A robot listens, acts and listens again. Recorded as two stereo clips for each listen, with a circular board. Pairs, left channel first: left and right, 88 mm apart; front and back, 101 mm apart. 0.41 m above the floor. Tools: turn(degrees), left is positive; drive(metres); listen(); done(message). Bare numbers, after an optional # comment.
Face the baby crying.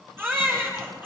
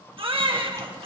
# The baby crying: 155° right.
turn(-155)
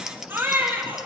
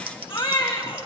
# The baby crying is now 25° right.
turn(-25)
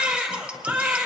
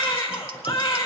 # The baby crying is now 15° right.
turn(-15)
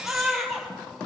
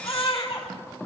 done("Facing the baby crying, 2 to 4 m away.")